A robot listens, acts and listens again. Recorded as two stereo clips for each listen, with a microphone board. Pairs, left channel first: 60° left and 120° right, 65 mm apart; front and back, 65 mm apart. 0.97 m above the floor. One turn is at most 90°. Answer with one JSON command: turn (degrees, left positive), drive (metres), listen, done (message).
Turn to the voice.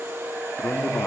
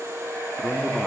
{"turn": 90}
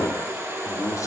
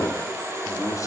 {"turn": 30}
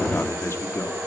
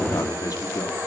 {"turn": 15}
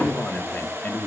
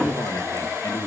{"done": "Found it: a man speaking, straight ahead."}